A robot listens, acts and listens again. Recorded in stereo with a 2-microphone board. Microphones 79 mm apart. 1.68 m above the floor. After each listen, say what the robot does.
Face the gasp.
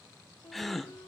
Turn 30° left.
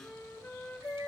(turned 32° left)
Keep listening.
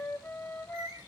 I heard a gasp, but can't make it out now. It was about 30° right or 145° left.